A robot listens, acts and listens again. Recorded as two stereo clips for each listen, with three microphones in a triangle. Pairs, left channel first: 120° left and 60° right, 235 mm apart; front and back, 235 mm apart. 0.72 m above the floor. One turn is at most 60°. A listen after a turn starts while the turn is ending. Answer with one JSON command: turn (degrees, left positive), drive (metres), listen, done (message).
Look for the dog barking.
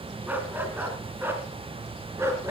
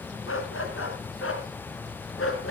{"turn": 20}
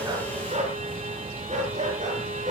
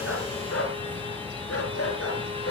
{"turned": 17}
{"done": "Found it: a dog barking, straight ahead."}